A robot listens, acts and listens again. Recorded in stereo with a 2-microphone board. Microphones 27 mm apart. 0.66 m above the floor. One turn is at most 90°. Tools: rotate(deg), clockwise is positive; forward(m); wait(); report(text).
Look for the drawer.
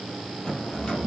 rotate(-35)
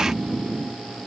wait()
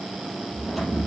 wait()
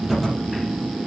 report("I heard a drawer, but can't make it out now. It was about straight ahead or 110° left.")